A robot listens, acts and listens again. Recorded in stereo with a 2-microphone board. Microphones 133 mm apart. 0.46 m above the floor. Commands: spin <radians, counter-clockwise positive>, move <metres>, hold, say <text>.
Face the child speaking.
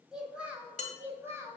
spin -0.35
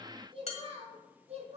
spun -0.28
spin -2.18
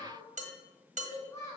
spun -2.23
spin 0.44
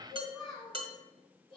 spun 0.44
say Facing the child speaking.